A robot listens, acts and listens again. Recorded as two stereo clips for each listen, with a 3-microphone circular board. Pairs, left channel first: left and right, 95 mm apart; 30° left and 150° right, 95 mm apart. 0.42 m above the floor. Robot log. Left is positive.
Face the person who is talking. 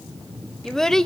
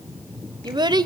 note: The child speaking: 175° left.
cmd yaw +175
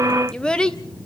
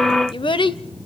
note: The child speaking is now 10° left.
cmd yaw +10
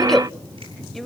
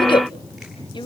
end: Facing the child speaking, under 1 m away.